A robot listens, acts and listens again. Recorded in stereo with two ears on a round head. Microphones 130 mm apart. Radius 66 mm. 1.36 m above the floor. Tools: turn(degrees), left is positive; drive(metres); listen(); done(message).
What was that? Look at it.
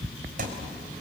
turn(degrees=-60)
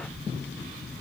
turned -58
listen()
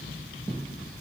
done("I heard a thud, but can't make it out now. It was about straight ahead or 65° right.")